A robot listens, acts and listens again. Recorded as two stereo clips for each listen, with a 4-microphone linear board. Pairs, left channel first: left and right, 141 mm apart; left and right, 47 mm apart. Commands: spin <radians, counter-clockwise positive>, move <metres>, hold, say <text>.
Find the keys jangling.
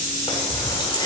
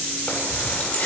spin 0.52
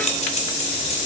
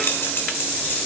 spin 2.18
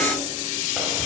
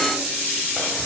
hold
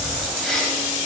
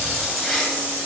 say Found it: keys jangling, straight ahead.